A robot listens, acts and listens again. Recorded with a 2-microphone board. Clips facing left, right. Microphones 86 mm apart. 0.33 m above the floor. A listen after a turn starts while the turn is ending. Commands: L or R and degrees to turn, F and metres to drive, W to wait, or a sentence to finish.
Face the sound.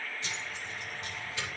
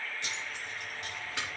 R75
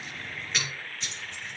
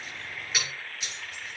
Found it: keys jangling, straight ahead, over 4 m away.